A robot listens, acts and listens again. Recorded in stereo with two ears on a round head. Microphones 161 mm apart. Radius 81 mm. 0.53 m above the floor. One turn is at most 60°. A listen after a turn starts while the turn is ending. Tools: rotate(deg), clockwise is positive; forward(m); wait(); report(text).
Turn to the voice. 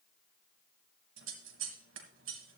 wait()
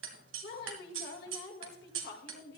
rotate(-60)
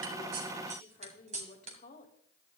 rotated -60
rotate(-50)
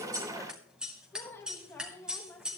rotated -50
rotate(-15)
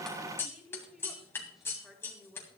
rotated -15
report("Found it: a woman speaking, straight ahead.")